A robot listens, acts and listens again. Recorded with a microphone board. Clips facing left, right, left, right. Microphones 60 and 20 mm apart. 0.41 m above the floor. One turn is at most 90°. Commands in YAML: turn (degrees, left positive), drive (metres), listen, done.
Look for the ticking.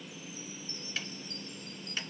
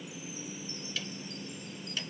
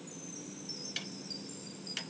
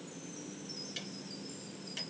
turn: 35
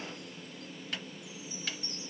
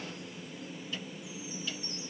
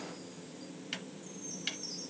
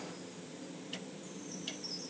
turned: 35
turn: 90
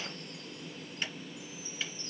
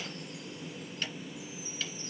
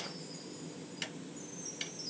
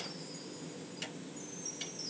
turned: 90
turn: 20
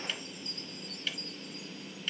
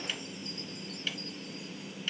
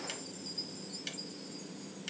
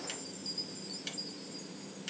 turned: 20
done: "Found it: ticking, straight ahead."